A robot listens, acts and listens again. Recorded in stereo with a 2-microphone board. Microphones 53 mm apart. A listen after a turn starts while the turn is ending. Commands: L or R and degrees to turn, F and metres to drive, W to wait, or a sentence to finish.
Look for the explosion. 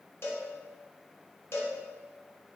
W
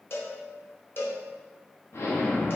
L60
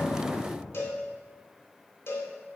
W
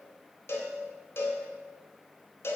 I heard an explosion, but can't make it out now. It was about straight ahead or 60° left.